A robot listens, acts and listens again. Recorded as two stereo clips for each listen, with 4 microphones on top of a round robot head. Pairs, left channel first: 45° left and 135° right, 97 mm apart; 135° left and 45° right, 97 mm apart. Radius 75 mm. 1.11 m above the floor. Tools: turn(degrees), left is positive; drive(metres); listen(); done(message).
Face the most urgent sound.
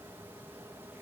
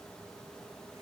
listen()
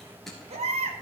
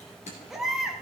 turn(degrees=-135)
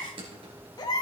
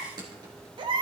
done("Facing the baby crying, 1 to 2 m away.")